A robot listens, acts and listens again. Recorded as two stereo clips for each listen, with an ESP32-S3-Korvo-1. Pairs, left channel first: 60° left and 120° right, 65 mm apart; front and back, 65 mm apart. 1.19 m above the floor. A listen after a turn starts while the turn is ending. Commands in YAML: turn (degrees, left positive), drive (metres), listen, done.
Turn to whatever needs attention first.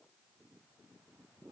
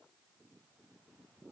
listen: true
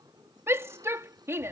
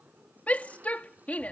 turn: -70
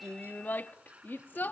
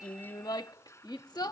done: "Found it: a shout, straight ahead."